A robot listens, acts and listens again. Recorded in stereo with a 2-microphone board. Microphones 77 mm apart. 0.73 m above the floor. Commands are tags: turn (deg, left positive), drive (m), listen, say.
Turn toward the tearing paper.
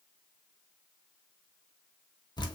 <listen/>
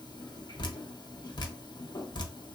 <listen/>
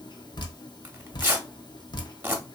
<turn deg="-30"/>
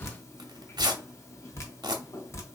<turn deg="-120"/>
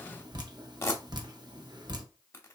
<turn deg="35"/>
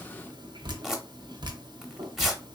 <say>Facing the tearing paper, under 1 m away.</say>